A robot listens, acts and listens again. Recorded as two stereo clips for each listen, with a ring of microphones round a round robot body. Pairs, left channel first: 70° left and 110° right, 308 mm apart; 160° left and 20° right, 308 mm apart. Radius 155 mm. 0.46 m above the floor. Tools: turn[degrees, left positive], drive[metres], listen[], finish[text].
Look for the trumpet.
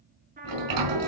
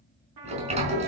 Thought: The trumpet: 50° right.
Action: turn[-50]
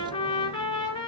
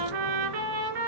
Thought: The trumpet is now 10° right.
Action: turn[-10]
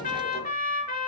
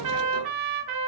Action: finish[Facing the trumpet.]